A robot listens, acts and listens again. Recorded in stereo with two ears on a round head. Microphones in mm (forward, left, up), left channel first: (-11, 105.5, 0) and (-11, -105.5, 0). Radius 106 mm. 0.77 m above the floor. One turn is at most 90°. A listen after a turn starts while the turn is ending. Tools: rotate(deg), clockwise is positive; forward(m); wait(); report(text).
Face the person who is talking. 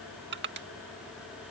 wait()
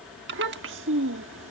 rotate(55)
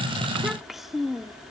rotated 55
report("Facing the child speaking.")